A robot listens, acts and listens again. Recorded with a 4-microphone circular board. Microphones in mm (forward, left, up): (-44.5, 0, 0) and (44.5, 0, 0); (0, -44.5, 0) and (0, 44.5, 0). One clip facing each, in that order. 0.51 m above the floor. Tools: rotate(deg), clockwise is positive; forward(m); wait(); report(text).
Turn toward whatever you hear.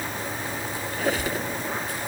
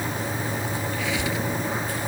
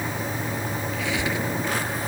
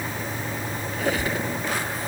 rotate(-135)
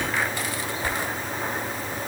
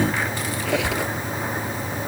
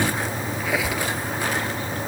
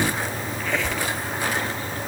rotate(10)
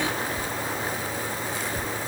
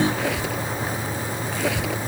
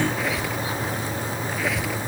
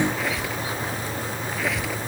report("Found it: a squeak, straight ahead.")